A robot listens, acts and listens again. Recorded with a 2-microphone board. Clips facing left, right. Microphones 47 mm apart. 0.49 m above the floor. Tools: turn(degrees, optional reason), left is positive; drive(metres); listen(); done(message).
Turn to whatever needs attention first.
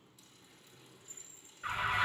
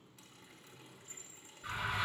turn(degrees=55, reason="The alarm: about 55° left or 125° left.")
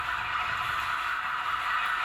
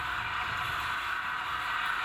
turn(degrees=70, reason="So it is at 70° left.")
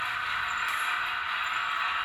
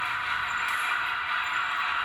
done("Found it: an alarm, straight ahead.")